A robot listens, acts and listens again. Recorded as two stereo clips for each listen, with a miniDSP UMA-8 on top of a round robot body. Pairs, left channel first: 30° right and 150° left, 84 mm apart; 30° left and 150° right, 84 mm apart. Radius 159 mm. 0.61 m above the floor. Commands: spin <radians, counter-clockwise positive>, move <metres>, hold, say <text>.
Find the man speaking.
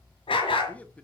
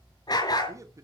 spin -1.83
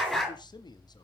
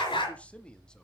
spin -0.87
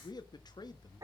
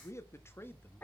spin -0.52
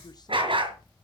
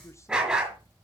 hold
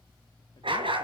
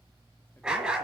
hold
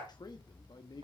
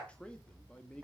spin -0.87
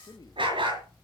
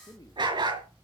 say Found it: a man speaking, straight ahead, 1 to 2 m away.